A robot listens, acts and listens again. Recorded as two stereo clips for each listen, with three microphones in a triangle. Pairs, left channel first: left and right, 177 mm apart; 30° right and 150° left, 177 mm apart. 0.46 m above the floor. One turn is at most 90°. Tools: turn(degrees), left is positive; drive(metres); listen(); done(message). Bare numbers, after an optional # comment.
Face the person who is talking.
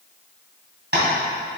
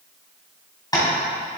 listen()
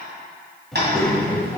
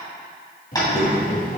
# The child speaking: 15° left.
turn(15)
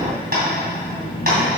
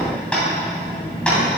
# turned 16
# The child speaking is now 30° left.
turn(30)
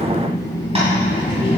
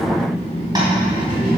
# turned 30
# The child speaking is now 35° left.
turn(35)
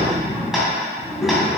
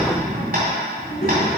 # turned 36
done("Found it: a child speaking, straight ahead.")